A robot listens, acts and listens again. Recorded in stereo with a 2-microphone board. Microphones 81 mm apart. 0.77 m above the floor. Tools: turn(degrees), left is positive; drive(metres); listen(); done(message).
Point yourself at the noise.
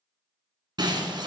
turn(degrees=-60)
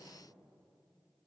listen()
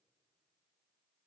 done("I heard breaking glass, but can't make it out now. It was about straight ahead or 60° right.")